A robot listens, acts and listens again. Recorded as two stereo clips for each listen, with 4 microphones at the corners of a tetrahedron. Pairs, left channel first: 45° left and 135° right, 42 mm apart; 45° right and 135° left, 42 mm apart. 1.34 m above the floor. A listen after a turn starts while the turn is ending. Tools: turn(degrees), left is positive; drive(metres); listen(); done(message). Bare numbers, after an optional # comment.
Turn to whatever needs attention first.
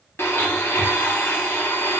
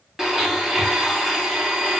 listen()
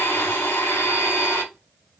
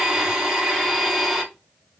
listen()
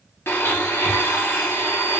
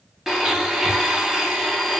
done("I can't make out anything urgent to turn to.")